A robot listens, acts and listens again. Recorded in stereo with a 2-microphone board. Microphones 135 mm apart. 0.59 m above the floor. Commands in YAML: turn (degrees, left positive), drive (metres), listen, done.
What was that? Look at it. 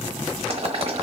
turn: -45
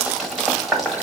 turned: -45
done: "Facing the boiling."